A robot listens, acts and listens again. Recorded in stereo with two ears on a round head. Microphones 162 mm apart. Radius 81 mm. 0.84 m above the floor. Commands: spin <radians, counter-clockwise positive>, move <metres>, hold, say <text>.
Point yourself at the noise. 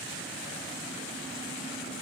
hold
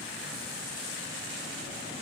hold
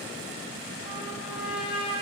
spin -0.52
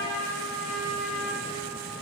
spin -2.09
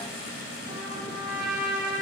spin -0.35
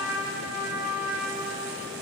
say Facing the trumpet, over 4 m away.